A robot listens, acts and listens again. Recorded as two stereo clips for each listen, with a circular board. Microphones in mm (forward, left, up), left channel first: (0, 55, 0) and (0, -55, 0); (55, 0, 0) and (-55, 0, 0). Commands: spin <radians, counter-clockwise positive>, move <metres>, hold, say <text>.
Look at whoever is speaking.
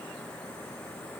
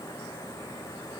hold
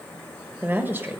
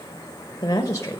spin -0.61
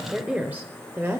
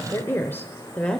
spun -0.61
spin -1.22
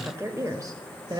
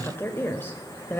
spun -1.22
spin -1.13
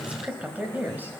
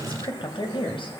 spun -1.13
spin -0.35
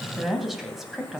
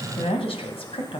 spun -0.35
say Found it: a woman speaking, straight ahead.